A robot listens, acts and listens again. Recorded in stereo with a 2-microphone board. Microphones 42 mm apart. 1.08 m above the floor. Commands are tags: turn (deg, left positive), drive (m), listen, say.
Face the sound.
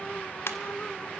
<turn deg="75"/>
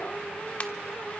<listen/>
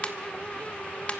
<turn deg="30"/>
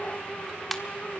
<say>Facing the ringtone, 1 to 2 m away.</say>